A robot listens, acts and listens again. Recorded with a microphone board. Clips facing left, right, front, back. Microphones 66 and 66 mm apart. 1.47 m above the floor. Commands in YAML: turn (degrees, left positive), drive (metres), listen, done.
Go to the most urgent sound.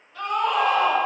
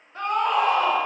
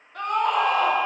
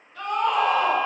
turn: -35
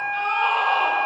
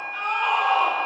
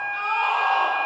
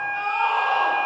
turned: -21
turn: -10
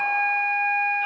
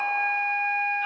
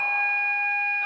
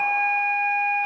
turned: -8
listen: true
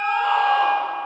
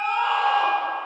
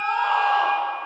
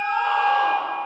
listen: true
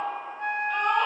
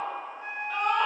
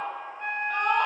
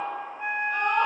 drive: 1.0
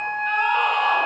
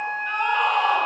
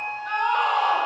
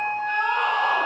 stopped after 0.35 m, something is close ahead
done: "Something is in my way. I am facing the scream but have not reached it."